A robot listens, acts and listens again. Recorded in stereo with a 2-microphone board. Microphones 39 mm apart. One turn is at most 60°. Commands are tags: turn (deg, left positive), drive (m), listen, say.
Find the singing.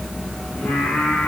<turn deg="55"/>
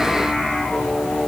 <turn deg="30"/>
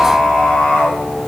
<turn deg="35"/>
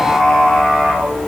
<turn deg="15"/>
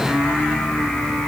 <turn deg="10"/>
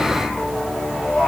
<say>Found it: singing, straight ahead, 2 to 4 m away.</say>